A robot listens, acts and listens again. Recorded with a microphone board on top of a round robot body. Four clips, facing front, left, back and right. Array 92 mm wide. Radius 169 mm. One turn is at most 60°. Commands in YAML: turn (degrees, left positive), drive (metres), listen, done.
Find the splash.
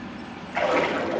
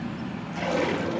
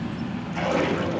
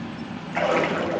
turn: -50
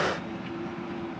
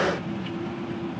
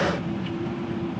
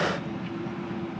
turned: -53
done: "I heard a splash from this way, but can't make it out now."